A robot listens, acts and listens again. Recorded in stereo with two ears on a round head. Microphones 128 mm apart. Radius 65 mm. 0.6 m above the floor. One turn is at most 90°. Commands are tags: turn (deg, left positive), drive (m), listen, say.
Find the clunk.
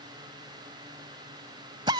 <listen/>
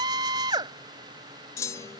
<turn deg="20"/>
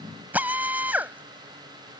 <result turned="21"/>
<listen/>
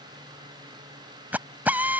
<say>I heard a clunk, but can't make it out now. It was about straight ahead or 135° left.</say>